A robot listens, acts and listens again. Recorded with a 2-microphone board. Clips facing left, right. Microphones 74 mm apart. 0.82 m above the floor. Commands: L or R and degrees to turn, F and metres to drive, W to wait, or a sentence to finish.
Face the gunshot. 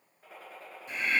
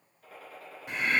L30
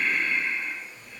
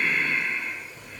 W
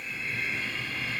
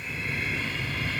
I heard a gunshot, but can't make it out now. It was about straight ahead or 120° left.